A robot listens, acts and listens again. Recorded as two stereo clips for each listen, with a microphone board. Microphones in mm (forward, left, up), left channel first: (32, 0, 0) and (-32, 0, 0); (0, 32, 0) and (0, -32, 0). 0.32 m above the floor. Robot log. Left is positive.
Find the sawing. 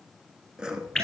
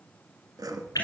note: The sawing: 100° right.
cmd yaw -100
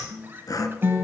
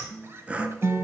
note: The sawing is now 20° right.
cmd yaw -20
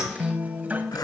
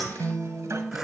note: The sawing is now 10° right.
cmd yaw -10
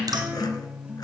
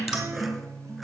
cmd idle
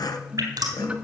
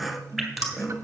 end: Facing the sawing.